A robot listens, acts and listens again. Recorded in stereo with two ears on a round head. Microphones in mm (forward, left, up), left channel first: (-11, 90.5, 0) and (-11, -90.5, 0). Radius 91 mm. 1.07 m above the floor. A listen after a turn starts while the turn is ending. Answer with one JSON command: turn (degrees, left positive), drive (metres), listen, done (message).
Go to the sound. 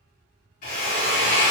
{"turn": 40}
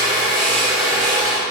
{"drive": 1.0}
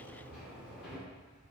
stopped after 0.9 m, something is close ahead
{"listen": true}
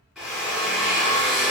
{"done": "I am next to the drill."}